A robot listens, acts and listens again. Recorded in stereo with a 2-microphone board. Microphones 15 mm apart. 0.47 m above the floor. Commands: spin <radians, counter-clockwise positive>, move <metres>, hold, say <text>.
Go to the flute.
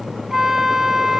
spin -0.52
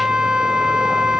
spin -2.01
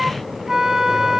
spin -0.61
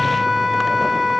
spin -0.26
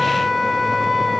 move 1.0
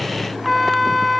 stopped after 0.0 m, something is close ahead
say Something is in my way. I am facing the flute but have not reached it.